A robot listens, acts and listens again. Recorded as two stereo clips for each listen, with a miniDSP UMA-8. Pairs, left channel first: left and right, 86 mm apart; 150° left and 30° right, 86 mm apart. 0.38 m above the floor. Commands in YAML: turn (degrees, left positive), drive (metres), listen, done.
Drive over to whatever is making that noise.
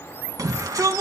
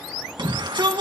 turn: -45
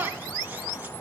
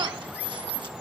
listen: true
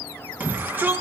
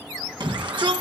turn: -20
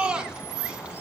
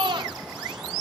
turn: -10
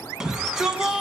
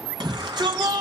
drive: 1.0
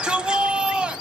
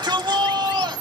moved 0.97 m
turn: -10
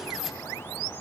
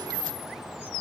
drive: 1.0
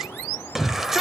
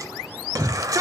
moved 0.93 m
drive: 1.0
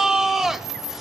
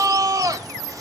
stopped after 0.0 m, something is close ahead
done: "Arrived at the shout, straight ahead."